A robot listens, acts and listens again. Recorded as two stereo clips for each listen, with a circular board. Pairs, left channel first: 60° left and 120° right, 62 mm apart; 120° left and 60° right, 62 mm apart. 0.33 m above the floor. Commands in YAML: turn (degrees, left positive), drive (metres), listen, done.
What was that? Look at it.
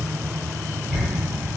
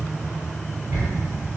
turn: -25
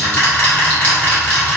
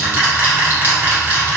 done: "Found it: ticking, straight ahead, 1 to 2 m away."